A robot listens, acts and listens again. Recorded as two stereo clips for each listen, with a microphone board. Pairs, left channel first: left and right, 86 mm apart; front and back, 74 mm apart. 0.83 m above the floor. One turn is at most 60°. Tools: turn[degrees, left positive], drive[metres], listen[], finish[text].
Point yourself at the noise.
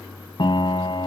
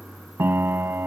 Thought: The piano: 120° left.
Action: turn[60]
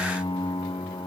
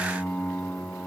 Thought: The piano is now 70° left.
Action: turn[60]
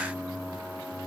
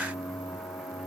Thought: Nothing new. It was at 10° left.
Action: turn[10]
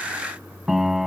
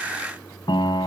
Action: finish[Found it: a piano, straight ahead.]